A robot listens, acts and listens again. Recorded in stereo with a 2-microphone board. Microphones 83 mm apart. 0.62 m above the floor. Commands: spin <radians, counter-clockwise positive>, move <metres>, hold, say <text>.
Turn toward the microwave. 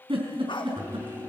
spin -0.44
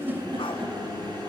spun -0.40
spin -2.27
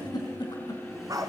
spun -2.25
say Facing the microwave.